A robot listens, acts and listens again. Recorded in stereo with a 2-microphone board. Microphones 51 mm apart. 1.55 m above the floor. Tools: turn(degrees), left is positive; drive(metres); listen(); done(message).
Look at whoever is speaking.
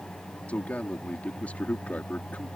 turn(degrees=25)
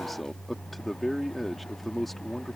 done("Facing the man speaking.")